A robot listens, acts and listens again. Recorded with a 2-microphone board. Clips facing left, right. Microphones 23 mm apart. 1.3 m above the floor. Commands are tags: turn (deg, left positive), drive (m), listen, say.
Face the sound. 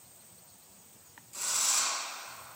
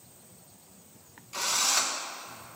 <turn deg="-45"/>
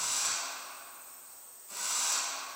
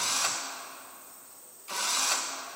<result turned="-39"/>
<turn deg="-90"/>
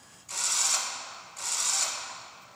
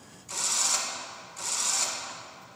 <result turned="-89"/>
<say>Facing the drill, 1 to 2 m away.</say>